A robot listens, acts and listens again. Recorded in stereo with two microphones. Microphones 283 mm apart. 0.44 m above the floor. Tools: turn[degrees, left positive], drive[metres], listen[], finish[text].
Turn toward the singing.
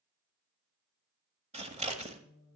Action: turn[90]
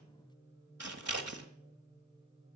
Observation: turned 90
Thought: So it is at 15° right.
Action: turn[-15]
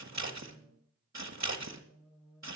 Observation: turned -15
Action: finish[Found it: singing, straight ahead, over 4 m away.]